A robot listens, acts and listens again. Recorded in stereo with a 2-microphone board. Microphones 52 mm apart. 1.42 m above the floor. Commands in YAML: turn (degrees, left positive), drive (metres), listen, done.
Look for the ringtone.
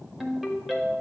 turn: -30
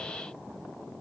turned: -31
listen: true
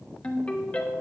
turn: 25
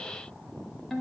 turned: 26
done: "Facing the ringtone, 1 to 2 m away."